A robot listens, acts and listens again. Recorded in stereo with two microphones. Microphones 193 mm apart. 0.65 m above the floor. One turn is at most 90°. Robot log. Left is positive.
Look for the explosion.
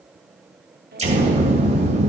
note: The explosion: about 35° right or 145° right.
cmd yaw -35
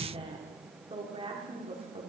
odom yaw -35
cmd idle
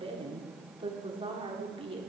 end: I heard an explosion, but can't make it out now. It was about straight ahead or 110° right.